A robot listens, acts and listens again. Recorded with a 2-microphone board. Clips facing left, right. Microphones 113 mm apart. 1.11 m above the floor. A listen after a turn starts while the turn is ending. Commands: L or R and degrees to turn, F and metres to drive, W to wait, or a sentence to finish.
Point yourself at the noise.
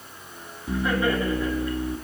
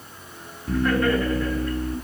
L30
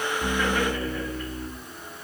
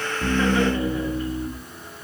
R20
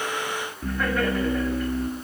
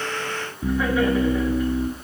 Facing the laughter.